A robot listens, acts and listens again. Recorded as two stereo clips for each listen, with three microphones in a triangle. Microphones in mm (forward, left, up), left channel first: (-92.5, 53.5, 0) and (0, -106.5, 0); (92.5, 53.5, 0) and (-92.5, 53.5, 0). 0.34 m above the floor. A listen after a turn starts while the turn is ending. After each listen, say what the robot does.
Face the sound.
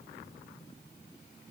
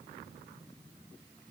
Keep listening.
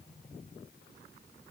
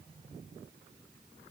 Keep listening.
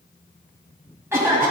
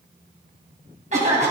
Turn 135° right.
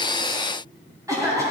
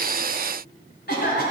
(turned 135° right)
Turn 10° left.
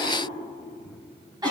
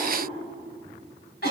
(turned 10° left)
Found it: a cough, straight ahead, 2 to 4 m away.